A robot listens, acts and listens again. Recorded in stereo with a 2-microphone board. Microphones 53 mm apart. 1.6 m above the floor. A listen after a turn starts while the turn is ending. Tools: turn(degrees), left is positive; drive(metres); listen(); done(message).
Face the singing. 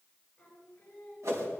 turn(degrees=20)
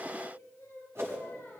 turn(degrees=140)
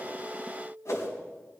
turn(degrees=-20)
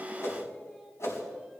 done("Found it: singing, straight ahead, over 4 m away.")